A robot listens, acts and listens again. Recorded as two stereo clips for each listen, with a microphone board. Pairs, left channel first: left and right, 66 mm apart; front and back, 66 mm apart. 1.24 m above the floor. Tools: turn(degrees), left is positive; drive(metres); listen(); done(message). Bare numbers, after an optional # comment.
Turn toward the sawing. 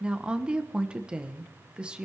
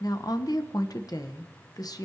listen()
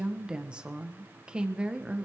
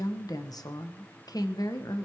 listen()
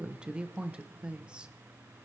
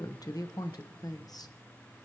done("I can't make out sawing, only a woman speaking.")